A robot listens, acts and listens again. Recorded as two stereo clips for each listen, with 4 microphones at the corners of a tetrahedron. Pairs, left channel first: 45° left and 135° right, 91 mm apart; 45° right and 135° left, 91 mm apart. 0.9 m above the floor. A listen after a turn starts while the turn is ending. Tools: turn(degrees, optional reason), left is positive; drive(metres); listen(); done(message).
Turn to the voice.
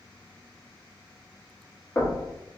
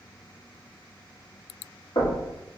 listen()
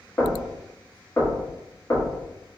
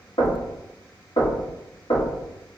listen()
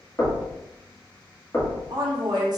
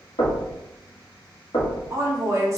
turn(degrees=-170, reason="The woman speaking: 170° right.")
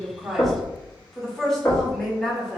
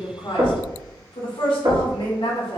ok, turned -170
turn(degrees=-40, reason="The woman speaking is now 40° right.")
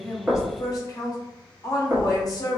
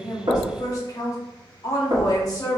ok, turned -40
done("Found it: a woman speaking, straight ahead.")